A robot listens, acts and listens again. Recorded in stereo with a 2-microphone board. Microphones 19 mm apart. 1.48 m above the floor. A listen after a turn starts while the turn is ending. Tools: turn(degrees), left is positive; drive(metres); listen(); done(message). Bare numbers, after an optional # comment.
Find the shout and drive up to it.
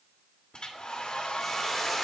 listen()
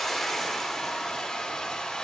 listen()
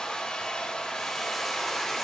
done("I can't make out a shout to turn to.")